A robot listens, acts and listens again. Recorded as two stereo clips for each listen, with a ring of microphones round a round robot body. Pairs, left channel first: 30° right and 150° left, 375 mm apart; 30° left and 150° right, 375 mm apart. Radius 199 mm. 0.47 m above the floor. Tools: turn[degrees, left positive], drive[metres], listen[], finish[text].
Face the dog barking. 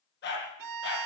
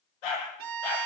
Thought: The dog barking: 30° left.
Action: turn[30]
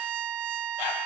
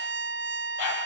Action: listen[]
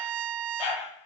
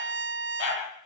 Thought: The dog barking is now 10° right.
Action: turn[-10]
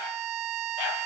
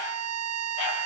Action: listen[]
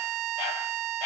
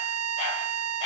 Action: listen[]
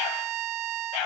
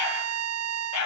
Thought: The dog barking is now 20° right.
Action: turn[-20]
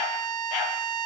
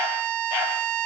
Action: listen[]
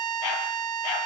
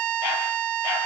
Action: listen[]
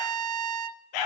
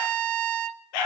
Action: finish[Facing the dog barking, over 4 m away.]